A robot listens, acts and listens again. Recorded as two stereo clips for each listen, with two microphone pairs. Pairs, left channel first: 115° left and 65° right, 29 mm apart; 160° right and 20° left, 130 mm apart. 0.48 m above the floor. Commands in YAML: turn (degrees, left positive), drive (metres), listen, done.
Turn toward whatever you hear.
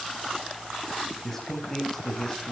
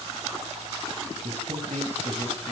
turn: 40
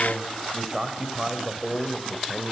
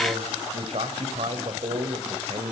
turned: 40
turn: 20
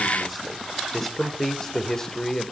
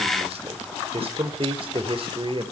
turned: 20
turn: 40
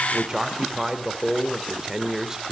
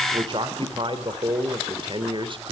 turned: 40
done: "Facing the man speaking, 2 to 4 m away."